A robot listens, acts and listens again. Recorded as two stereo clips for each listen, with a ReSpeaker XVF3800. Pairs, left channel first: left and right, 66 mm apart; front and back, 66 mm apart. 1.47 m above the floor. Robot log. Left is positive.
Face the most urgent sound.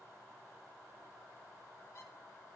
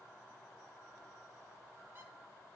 cmd idle
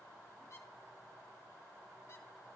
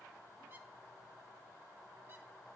cmd idle
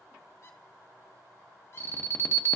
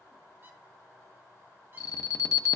note: The alarm: 35° left.
cmd yaw +35
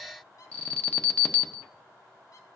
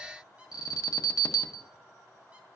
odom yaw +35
note: The alarm is now 20° left.
cmd yaw +20
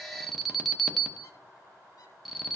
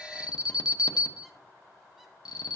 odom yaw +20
end: Found it: an alarm, straight ahead, under 1 m away.